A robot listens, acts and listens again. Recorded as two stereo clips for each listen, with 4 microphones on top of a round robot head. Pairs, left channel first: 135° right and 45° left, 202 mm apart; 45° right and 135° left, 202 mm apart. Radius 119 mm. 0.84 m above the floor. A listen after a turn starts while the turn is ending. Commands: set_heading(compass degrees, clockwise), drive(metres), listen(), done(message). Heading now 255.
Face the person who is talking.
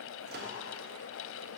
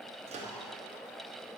listen()
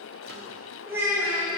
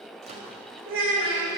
set_heading(130)
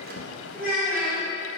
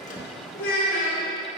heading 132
done("Found it: a child speaking, straight ahead, 1 to 2 m away.")